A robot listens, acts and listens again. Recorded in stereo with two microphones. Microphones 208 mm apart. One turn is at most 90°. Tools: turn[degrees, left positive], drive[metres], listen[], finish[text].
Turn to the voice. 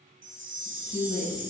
Thought: The woman speaking: about 30° left or 150° left.
Action: turn[30]
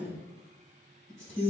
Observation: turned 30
Action: finish[Facing the woman speaking.]